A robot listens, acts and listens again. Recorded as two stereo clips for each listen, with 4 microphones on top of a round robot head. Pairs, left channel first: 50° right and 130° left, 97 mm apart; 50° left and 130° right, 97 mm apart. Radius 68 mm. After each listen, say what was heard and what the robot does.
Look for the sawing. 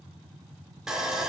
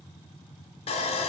The sawing: 45° left. Turn 45° left.
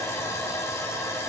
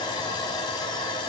The sawing is now 10° left. Turn 10° left.
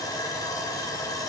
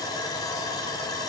Facing the sawing, under 1 m away.